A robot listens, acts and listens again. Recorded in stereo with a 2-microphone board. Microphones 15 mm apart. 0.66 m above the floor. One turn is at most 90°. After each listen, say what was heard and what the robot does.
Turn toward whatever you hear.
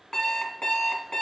Turn 90° left.
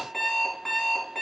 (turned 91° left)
Found it: an alarm clock, straight ahead, 2 to 4 m away.